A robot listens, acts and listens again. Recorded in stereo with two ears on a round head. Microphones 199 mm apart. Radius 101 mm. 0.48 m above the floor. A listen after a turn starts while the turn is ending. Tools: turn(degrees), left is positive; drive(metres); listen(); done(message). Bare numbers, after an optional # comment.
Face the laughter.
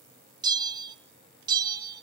listen()
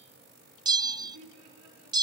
turn(-90)
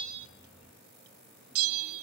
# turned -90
listen()
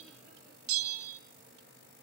listen()
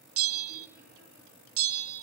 done("I heard laughter from this way, but can't make it out now.")